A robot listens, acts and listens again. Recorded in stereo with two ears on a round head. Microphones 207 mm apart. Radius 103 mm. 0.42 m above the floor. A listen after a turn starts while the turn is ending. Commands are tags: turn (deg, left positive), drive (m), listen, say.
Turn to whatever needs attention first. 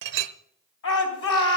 <turn deg="60"/>
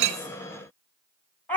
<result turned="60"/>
<turn deg="10"/>
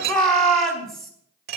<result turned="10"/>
<say>Found it: a shout, straight ahead, 2 to 4 m away.</say>